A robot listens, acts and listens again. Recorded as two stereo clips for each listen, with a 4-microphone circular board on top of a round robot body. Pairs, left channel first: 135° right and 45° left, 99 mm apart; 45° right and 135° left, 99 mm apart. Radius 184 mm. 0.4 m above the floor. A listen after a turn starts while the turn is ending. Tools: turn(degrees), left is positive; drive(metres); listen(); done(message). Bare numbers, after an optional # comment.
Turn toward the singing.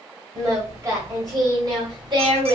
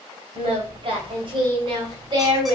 # The singing: 85° left.
turn(85)
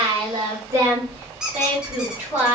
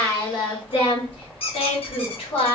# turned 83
# The singing is now 25° right.
turn(-25)
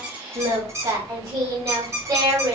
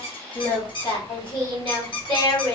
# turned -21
# The singing is now 10° right.
turn(-10)
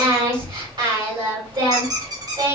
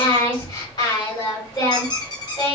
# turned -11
done("Found it: singing, straight ahead, 2 to 4 m away.")